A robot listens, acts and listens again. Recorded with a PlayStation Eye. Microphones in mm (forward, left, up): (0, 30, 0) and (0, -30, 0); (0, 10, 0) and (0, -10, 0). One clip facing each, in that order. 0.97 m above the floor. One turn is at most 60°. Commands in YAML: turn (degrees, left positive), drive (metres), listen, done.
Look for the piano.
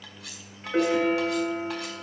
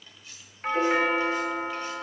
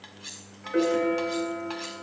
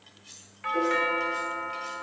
turn: 40
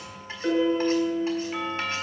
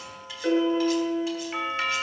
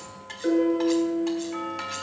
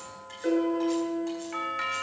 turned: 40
done: "Facing the piano, over 4 m away."